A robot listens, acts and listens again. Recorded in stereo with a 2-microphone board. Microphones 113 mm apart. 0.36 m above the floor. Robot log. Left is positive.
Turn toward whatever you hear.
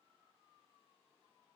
cmd idle
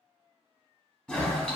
cmd yaw +30
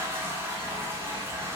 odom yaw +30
note: So it is at 20° right.
cmd yaw -20
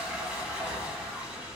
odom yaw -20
end: Found it: a toilet flushing, straight ahead, under 1 m away.